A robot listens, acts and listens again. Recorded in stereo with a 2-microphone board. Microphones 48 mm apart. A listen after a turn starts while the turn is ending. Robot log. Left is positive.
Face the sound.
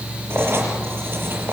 note: The writing: about 55° right or 125° right.
cmd yaw -55
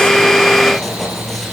end: Found it: writing, straight ahead.